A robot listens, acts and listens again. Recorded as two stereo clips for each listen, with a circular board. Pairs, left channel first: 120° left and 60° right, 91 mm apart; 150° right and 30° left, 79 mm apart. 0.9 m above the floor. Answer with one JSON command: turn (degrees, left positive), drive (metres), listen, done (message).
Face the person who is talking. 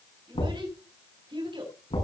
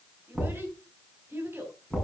{"turn": -30}
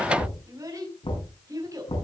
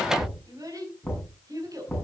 {"turn": -10}
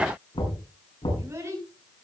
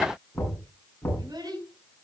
{"done": "Facing the child speaking, over 4 m away."}